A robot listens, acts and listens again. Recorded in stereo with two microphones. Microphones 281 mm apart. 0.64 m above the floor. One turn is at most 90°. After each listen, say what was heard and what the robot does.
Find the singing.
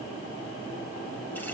Keep listening.
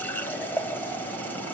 Keep listening.
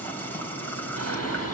The singing: about 60° left or 120° left. Turn 60° left.
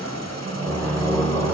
Found it: singing, straight ahead, over 4 m away.